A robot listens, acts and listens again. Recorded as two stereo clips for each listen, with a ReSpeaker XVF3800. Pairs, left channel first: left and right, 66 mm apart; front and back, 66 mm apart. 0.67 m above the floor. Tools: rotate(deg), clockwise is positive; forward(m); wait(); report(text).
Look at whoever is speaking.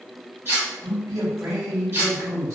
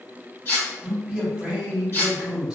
rotate(105)
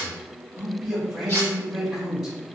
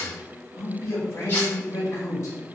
rotate(10)
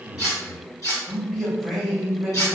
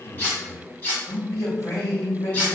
report("Found it: a man speaking, straight ahead.")